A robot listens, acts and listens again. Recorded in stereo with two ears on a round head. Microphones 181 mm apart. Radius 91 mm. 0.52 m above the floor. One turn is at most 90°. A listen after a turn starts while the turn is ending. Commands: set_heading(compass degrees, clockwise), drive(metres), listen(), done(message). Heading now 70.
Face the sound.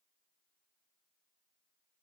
listen()
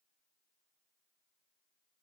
listen()
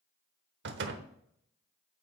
set_heading(130)
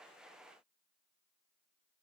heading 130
listen()
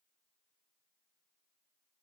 done("I heard a door slam, but can't make it out now. It was about straight ahead or 60° right.")